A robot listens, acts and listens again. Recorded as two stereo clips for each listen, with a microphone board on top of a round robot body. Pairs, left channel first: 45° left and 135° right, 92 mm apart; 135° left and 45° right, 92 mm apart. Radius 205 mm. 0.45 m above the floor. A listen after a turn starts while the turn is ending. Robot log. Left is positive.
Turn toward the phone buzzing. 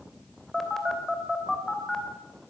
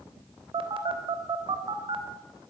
note: The phone buzzing: 40° right.
cmd yaw -40
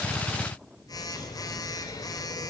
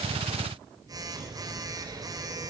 end: Facing the phone buzzing, 2 to 4 m away.